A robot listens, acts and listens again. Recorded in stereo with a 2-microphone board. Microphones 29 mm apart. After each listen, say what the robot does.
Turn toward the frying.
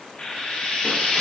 Turn 35° left.
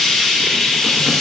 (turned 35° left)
Found it: frying, straight ahead, 1 to 2 m away.